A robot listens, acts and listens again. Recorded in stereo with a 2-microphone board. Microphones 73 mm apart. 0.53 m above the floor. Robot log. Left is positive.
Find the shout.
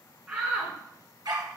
note: The shout: about 15° right or 165° right.
cmd yaw -15
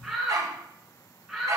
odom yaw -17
end: Facing the shout.